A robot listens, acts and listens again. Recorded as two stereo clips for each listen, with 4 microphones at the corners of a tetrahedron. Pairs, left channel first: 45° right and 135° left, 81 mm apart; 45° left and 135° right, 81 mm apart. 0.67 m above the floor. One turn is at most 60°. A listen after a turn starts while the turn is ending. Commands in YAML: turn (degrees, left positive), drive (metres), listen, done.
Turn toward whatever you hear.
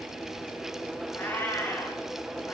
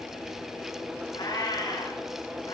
turn: 20
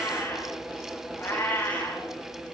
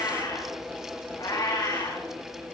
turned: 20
turn: 20
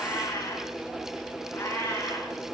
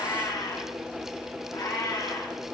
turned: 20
turn: 15
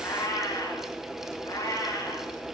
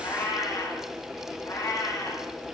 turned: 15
done: "Found it: a cat meowing, straight ahead, over 4 m away."